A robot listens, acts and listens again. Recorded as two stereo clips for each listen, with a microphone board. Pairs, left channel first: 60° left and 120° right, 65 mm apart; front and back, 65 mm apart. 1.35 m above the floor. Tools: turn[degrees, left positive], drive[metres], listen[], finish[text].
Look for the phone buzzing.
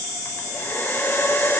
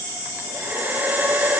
Action: listen[]
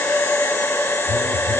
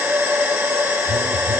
Thought: The phone buzzing: 170° right.
Action: turn[-170]
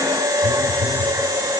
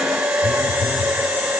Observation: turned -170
Thought: The phone buzzing is now 30° right.
Action: turn[-30]
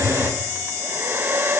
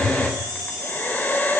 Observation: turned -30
Thought: The phone buzzing is now 15° left.
Action: turn[15]
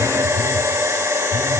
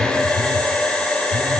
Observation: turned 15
Action: finish[Facing the phone buzzing, over 4 m away.]